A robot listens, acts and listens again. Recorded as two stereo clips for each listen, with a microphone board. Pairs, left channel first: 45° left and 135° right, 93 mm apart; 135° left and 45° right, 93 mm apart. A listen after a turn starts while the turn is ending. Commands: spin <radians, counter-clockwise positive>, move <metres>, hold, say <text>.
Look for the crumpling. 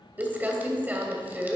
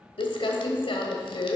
spin 2.71
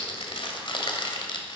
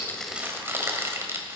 spin 0.35
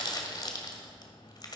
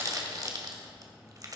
say Found it: crumpling, straight ahead, 1 to 2 m away.